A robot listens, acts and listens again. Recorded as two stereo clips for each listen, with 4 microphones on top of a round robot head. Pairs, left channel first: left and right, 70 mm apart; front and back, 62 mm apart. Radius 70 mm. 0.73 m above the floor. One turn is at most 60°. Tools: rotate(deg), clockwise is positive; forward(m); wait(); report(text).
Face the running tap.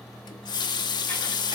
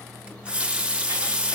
rotate(-60)
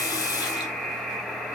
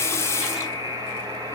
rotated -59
rotate(-50)
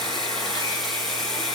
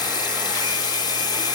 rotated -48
report("Found it: a running tap, straight ahead, under 1 m away.")